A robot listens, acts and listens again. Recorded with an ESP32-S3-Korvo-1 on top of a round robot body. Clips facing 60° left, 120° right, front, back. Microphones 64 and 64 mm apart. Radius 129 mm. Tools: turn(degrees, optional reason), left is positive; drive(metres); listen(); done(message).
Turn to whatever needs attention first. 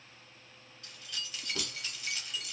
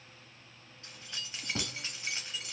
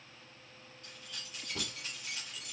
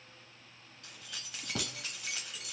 listen()
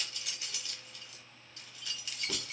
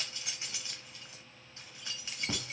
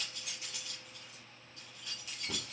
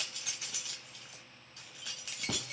listen()
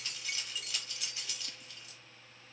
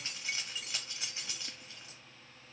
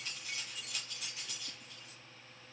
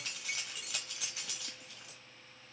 done("I can't make out anything urgent to turn to.")